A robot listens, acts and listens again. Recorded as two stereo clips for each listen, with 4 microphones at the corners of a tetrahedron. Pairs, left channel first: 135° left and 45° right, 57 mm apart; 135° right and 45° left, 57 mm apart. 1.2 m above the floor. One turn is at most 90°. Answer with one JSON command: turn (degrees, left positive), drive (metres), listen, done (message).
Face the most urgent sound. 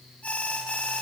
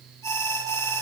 {"turn": -90}
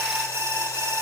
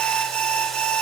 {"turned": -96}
{"turn": -65}
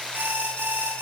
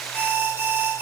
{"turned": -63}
{"done": "Found it: an alarm, straight ahead."}